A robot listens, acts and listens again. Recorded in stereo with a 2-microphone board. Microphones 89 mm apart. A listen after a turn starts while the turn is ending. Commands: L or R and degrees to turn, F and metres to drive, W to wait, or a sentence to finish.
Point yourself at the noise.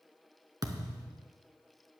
R45
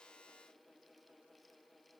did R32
W
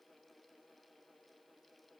I heard a thud, but can't make it out now. It was about 15° right or 105° right.